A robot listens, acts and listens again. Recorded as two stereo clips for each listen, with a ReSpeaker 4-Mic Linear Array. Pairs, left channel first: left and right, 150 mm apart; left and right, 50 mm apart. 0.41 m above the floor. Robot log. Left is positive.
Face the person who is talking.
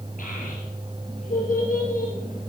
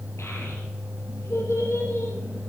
note: The child speaking: about 60° left or 120° left.
cmd yaw +60
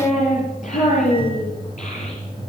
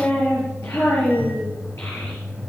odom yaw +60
note: So it is at 60° left.
cmd yaw +60
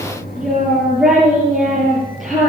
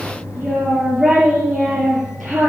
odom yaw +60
end: Facing the child speaking, over 4 m away.